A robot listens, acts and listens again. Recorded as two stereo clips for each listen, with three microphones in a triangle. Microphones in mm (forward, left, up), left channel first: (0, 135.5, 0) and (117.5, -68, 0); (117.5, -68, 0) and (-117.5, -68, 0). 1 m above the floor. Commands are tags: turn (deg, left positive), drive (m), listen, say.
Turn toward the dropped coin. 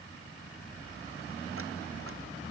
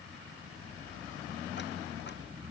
<listen/>
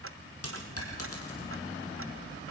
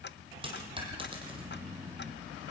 <turn deg="115"/>
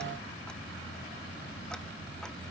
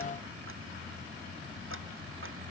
<say>I heard a dropped coin from this way, but can't make it out now.</say>